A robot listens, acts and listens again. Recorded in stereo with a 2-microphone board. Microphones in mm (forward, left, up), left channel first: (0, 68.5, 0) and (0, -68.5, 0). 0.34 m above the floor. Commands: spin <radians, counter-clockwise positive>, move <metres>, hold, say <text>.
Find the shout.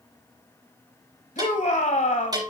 spin 1.05
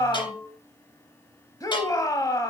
spin 0.52
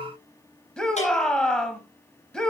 say Facing the shout.